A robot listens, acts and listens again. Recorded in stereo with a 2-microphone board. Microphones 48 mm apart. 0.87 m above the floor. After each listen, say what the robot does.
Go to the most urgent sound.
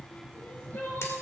Turn 45° left.
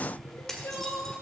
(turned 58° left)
Turn 80° left.
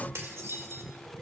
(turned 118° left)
Turn 40° right.
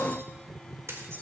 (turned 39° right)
Keep listening.
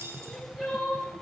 Drive 1.0 m forward.
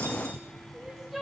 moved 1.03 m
Drive 1.0 m forward.
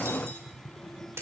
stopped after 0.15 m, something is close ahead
Keep listening.
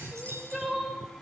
Something is in my way. I am facing the crying but have not reached it.